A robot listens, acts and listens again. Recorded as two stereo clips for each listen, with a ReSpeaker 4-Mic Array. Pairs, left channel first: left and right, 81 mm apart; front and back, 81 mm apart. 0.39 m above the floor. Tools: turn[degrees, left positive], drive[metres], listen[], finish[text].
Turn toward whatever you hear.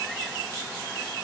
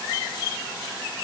Action: listen[]
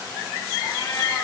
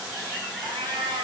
Thought: The cat meowing: 165° left.
Action: turn[165]
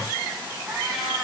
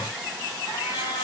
Action: finish[Found it: a cat meowing, straight ahead, over 4 m away.]